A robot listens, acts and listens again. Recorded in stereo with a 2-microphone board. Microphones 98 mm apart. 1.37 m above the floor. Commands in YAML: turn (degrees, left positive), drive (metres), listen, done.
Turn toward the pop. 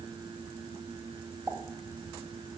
turn: -15
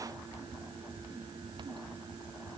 listen: true
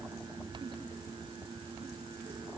done: "I heard a pop, but can't make it out now. It was about straight ahead or 150° right."